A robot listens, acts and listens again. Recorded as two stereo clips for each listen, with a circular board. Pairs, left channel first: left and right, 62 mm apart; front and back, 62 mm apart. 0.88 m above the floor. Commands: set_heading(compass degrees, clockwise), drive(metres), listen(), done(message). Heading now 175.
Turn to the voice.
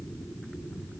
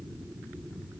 listen()
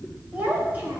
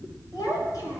set_heading(200)
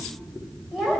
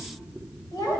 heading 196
done("Facing the child speaking.")